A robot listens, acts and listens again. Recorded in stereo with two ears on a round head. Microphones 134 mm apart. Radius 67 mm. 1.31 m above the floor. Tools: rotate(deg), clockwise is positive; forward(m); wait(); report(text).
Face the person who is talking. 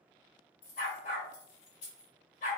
wait()
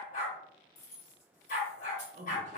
rotate(50)
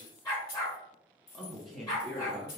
report("Found it: a man speaking, straight ahead, under 1 m away.")